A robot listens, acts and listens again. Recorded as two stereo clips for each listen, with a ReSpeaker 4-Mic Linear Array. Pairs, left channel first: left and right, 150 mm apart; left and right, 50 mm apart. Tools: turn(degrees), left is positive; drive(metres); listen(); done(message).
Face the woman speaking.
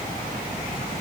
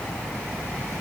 listen()
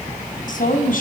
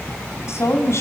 turn(degrees=65)
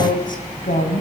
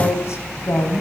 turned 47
turn(degrees=60)
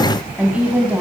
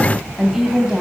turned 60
turn(degrees=-10)
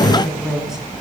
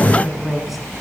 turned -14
done("Facing the woman speaking.")